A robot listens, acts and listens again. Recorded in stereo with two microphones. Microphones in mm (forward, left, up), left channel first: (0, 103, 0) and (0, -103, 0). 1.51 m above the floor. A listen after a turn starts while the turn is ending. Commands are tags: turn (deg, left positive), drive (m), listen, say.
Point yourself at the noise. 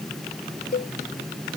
<turn deg="45"/>
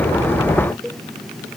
<say>Facing the cowbell.</say>